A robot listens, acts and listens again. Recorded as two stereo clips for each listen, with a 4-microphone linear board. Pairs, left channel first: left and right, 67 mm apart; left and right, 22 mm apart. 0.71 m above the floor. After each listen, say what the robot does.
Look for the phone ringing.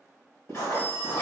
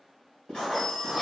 Turn 30° left.
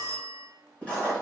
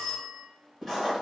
Turn 115° left.
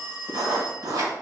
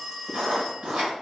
Turn 25° left.
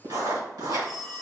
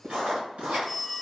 Facing the phone ringing.